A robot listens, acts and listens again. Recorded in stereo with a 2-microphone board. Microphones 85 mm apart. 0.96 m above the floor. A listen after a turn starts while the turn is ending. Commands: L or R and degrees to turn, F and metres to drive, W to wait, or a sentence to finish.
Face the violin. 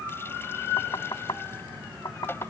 W
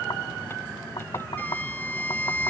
L20
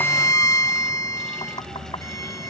L135
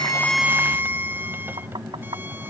R25
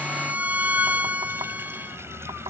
R20
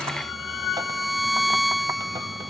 Facing the violin.